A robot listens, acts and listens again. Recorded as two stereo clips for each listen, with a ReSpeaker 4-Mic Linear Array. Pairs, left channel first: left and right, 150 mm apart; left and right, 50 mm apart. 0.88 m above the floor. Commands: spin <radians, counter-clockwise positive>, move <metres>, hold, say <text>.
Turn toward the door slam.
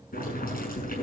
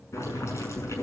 hold
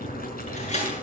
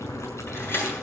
spin 0.87
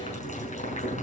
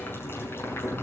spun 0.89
hold
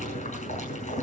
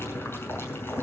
say I heard a door slam, but can't make it out now. It was about straight ahead or 80° left.